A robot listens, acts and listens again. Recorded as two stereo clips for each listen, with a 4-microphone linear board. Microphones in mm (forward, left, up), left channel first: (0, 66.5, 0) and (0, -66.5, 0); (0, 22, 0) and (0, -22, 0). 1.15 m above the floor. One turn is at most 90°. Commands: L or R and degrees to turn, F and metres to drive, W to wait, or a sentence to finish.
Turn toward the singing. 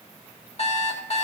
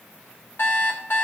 W
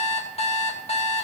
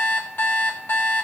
W
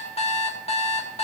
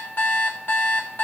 I can't make out singing, only an alarm clock.